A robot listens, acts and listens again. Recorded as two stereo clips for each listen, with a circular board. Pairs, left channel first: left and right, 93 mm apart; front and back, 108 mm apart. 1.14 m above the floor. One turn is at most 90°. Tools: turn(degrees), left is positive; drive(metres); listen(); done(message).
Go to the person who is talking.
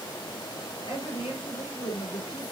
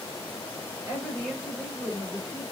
turn(degrees=90)
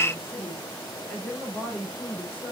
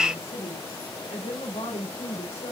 turn(degrees=20)
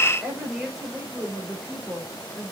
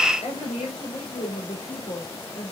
drive(metres=1.0)
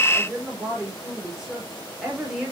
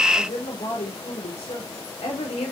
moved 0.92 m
drive(metres=1.0)
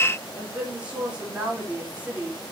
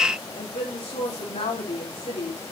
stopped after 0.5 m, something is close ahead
turn(degrees=-10)
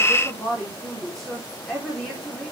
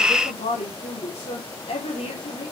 done("Blocked. The woman speaking is further on, straight ahead.")